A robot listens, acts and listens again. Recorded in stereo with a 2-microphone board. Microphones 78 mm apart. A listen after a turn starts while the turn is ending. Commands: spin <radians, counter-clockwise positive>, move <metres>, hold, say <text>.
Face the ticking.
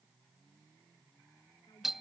hold
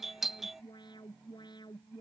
hold
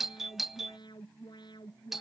say I can't make out ticking to turn to.